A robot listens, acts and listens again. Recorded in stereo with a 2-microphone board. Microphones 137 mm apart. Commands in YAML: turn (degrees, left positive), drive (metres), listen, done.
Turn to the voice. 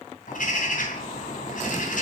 listen: true
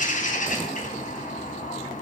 listen: true
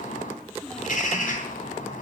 turn: 30
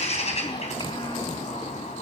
listen: true
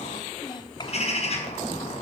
turn: 140
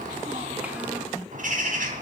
listen: true
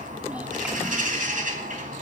listen: true
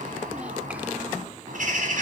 done: "Facing where the child speaking came from. I can't hear it now."